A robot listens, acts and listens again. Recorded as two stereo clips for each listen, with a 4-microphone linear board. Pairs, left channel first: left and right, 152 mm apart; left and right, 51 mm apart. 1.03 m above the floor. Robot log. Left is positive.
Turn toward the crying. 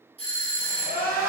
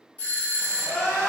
note: The crying: about 60° left or 120° left.
cmd yaw +60
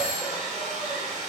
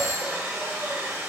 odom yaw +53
cmd idle
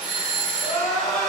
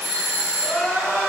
note: So it is at 25° left.
cmd yaw +25
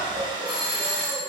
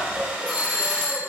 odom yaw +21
end: Facing the crying.